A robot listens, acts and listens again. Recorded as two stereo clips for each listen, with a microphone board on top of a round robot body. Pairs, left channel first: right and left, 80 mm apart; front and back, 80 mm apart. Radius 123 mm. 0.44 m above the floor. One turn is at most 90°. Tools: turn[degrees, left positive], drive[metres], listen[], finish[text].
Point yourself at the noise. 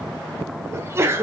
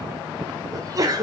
Thought: The sneeze: 145° left.
Action: turn[90]
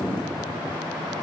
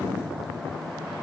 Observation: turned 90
Thought: Nothing new. It was at 55° left.
Action: turn[55]
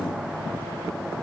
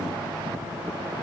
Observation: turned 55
Action: finish[Facing where the sneeze came from. I can't hear it now.]